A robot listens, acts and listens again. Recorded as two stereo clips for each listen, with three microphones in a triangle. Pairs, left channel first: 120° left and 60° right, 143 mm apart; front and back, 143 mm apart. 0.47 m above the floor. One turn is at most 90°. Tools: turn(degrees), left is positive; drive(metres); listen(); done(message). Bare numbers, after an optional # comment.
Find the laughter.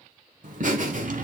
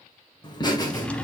# The laughter: 60° right.
turn(-60)
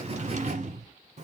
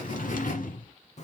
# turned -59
# The laughter is now 30° right.
turn(-30)
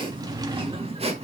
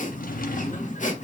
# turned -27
# The laughter is now 20° right.
turn(-20)
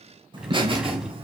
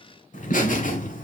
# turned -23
# The laughter is now 15° right.
turn(-15)
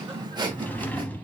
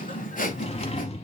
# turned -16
done("Found it: laughter, straight ahead, 1 to 2 m away.")